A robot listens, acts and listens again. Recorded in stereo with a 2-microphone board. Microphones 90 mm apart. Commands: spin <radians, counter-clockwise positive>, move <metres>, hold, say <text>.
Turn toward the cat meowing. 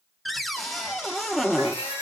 spin 1.57
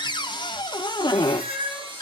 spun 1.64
spin -0.26
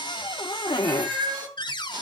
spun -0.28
say Facing the cat meowing.